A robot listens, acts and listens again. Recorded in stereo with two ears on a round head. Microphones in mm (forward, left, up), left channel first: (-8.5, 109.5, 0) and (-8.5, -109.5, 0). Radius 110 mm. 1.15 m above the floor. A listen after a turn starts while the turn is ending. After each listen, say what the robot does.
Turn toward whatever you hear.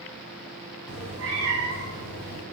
Turn 60° right.
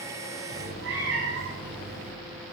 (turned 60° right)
Turn 55° right.
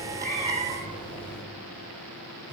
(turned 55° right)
Turn 20° right.
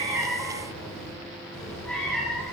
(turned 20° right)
Found it: a cat meowing, straight ahead.